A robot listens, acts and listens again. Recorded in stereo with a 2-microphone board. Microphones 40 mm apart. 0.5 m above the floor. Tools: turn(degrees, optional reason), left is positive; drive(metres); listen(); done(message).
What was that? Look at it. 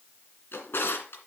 turn(degrees=90)
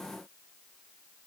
listen()
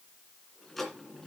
turn(degrees=10, reason="The drawer is now 10° left.")
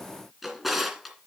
done("Found it: a drawer, straight ahead, 2 to 4 m away.")